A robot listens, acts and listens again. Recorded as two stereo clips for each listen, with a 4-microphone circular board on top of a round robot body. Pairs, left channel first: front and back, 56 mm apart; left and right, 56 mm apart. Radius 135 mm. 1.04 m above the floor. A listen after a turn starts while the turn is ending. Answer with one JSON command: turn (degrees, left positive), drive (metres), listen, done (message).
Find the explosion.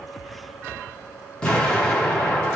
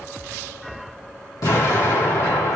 {"turn": 75}
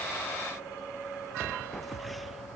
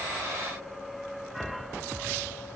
{"done": "I heard an explosion from this way, but can't make it out now."}